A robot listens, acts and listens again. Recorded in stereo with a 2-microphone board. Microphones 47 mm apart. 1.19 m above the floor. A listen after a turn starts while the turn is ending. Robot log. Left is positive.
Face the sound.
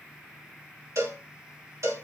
cmd yaw -90
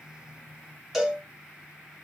end: Found it: a cowbell, straight ahead.